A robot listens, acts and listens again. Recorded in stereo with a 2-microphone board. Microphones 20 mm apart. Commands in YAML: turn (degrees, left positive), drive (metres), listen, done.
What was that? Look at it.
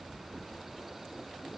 listen: true
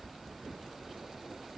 listen: true
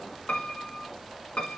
turn: 90
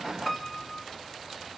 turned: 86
turn: 10
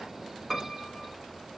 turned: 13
done: "Found it: a piano, straight ahead."